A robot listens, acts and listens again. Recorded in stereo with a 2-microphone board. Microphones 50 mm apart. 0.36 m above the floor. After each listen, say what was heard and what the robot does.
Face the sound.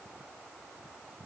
Keep listening.
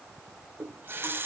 The running tap: about 45° right or 135° right. Turn 45° right.
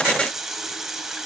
So it is at 10° right. Turn 10° right.
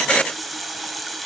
Facing the running tap, 1 to 2 m away.